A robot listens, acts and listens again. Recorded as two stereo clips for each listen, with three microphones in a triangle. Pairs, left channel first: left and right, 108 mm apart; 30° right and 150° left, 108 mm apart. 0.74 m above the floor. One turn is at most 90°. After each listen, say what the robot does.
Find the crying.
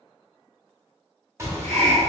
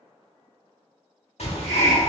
Keep listening.
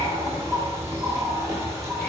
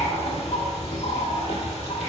Keep listening.
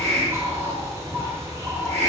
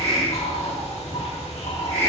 I can't make out crying, only a bird and a hiss.